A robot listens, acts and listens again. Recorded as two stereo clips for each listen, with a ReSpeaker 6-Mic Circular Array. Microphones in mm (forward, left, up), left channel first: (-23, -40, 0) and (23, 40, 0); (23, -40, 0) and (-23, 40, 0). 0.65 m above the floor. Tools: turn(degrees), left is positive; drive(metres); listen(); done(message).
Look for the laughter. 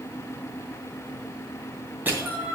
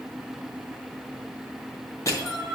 turn(degrees=80)
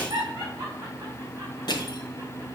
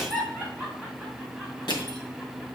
done("Found it: laughter, straight ahead.")